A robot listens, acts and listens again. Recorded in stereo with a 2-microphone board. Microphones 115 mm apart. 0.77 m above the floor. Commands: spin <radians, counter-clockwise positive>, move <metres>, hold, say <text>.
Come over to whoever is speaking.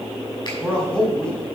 spin 0.52
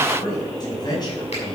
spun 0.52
spin 2.44
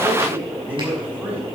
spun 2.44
spin -0.26
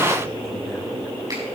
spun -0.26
hold
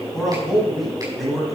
move 1.0
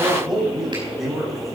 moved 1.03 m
move 1.0
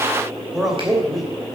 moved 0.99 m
move 1.0
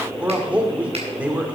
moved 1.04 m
spin -0.17
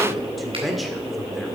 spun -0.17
move 1.0
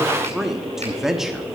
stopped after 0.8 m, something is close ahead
say Arrived at the man speaking, straight ahead.